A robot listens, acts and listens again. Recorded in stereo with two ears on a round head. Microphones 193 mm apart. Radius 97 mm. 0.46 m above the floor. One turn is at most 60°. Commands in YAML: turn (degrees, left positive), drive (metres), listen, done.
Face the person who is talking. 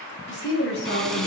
turn: 60
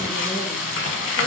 listen: true
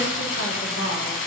listen: true
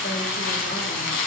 done: "I heard a woman speaking, but can't make it out now. It was about straight ahead or 60° left."